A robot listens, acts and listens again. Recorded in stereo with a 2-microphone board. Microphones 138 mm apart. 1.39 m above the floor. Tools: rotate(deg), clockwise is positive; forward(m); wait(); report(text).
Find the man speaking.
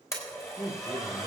rotate(-70)
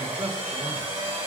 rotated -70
report("Found it: a man speaking, straight ahead.")